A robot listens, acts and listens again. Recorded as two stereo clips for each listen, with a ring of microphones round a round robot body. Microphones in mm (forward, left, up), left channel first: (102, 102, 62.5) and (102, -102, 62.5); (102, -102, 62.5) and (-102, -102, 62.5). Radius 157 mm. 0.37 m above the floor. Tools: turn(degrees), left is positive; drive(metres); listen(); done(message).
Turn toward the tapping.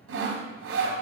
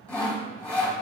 listen()
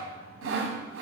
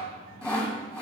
listen()
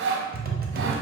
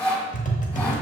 turn(degrees=-50)
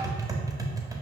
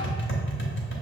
turn(degrees=-15)
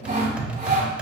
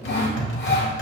done("Facing the tapping.")